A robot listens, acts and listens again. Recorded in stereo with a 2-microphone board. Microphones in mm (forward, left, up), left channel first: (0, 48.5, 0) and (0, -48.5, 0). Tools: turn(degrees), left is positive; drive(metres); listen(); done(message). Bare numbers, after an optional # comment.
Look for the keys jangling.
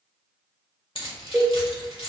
# The keys jangling: about 65° left or 115° left.
turn(65)
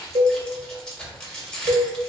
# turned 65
done("Facing the keys jangling, 1 to 2 m away.")